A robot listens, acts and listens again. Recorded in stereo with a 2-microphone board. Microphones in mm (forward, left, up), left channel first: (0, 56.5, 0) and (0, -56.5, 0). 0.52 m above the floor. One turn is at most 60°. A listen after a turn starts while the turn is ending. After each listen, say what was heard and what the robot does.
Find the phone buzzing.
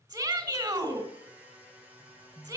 The phone buzzing: about 50° right or 130° right. Turn 50° right.
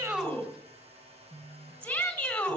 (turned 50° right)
So it is at 80° right. Turn 60° right.
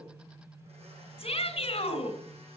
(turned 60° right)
The phone buzzing is now 25° right. Turn 25° right.
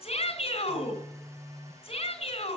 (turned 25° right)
The phone buzzing is now 10° left. Turn 10° left.
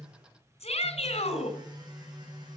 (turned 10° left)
Found it: a phone buzzing, straight ahead, over 4 m away.